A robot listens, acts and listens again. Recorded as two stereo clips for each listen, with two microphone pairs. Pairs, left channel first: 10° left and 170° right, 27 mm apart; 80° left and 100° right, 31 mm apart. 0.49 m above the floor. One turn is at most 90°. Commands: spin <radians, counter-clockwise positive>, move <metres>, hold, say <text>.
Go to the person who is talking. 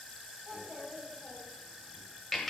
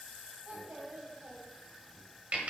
spin -1.57
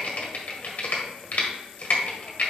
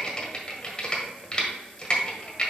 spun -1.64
spin -0.44
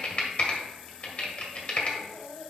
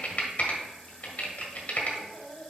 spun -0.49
move 1.0
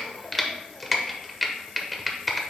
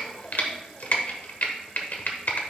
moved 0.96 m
hold
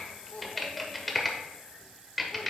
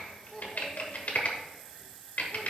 move 1.0
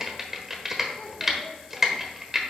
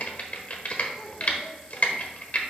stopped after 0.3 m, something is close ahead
hold
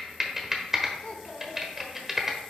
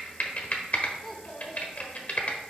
spin 0.17
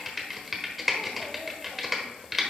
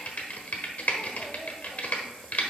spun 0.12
hold
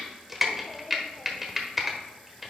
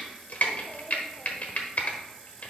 hold
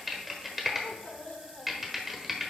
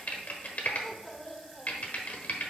say I am next to the child speaking.